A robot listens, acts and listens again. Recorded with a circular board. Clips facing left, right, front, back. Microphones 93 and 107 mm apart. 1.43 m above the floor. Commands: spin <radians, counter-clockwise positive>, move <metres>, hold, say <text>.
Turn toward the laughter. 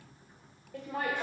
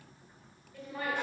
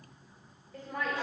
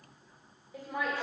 spin 1.66
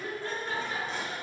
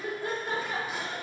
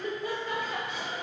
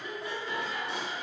spin -0.70
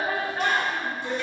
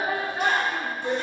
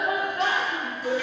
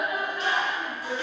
spin -0.35
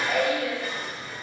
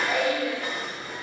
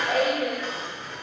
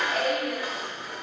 say Facing the laughter, 2 to 4 m away.